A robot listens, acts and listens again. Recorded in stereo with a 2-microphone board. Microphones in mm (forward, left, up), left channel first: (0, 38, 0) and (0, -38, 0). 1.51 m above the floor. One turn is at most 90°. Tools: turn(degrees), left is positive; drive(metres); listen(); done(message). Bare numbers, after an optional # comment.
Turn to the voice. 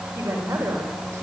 # The woman speaking: about 30° right or 150° right.
turn(-30)
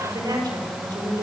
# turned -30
# So it is at 115° right.
turn(-90)
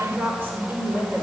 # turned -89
# The woman speaking is now 30° right.
turn(-30)
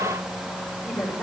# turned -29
done("Found it: a woman speaking, straight ahead, over 4 m away.")